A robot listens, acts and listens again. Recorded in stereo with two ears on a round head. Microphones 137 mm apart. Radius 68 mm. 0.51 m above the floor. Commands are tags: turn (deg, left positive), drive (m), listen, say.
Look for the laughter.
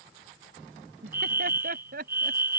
<turn deg="-70"/>
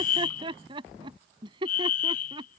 <turn deg="-30"/>
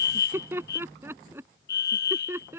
<turn deg="-15"/>
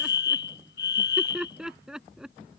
<say>Found it: laughter, straight ahead.</say>